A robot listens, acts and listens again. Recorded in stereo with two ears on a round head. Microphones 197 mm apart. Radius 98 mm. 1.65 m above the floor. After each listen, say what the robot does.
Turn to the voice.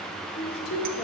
Turn 50° left.
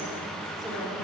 Keep listening.
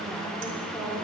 Found it: a woman speaking, straight ahead.